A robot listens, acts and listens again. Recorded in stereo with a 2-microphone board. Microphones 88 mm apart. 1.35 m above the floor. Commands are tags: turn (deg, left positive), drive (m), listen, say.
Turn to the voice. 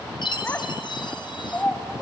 <turn deg="30"/>
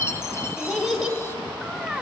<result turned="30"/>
<say>Found it: a child speaking, straight ahead, 2 to 4 m away.</say>